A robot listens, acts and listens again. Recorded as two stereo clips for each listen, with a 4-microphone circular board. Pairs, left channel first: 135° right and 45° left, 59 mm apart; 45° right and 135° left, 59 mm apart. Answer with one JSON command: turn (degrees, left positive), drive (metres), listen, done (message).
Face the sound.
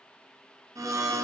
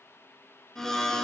{"turn": 35}
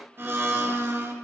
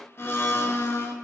{"done": "Found it: a blender, straight ahead, under 1 m away."}